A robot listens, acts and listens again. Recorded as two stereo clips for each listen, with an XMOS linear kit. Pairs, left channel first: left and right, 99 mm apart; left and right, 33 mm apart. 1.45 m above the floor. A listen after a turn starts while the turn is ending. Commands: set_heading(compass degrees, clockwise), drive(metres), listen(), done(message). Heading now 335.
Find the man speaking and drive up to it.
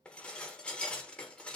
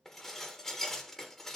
listen()
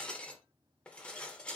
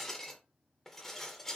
listen()
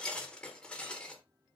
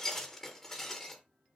done("I can't make out a man speaking, only dishes clattering.")